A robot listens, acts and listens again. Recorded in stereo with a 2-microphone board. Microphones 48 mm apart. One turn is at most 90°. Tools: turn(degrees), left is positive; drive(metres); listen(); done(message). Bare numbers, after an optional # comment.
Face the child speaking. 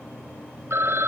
listen()
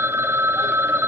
listen()
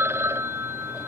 done("I can't make out a child speaking, only a phone ringing.")